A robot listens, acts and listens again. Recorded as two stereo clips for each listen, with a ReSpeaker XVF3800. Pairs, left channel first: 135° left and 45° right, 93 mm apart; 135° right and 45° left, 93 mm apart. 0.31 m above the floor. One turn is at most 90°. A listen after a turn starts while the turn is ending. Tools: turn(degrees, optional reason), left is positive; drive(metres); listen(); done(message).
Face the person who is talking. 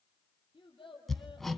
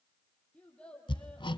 turn(degrees=90, reason="The child speaking: 150° left.")
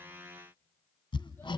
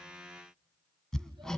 turn(degrees=60, reason="Nothing new. It was at 60° left.")
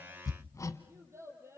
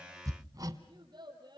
turn(degrees=10, reason="The child speaking is now 10° left.")
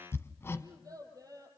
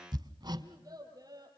done("Facing the child speaking.")